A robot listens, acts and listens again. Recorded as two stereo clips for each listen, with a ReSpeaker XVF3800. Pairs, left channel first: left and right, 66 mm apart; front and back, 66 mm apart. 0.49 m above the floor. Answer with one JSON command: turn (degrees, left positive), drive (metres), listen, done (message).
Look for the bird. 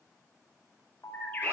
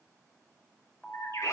{"turn": 30}
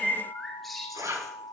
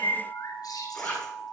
{"done": "Facing the bird, 2 to 4 m away."}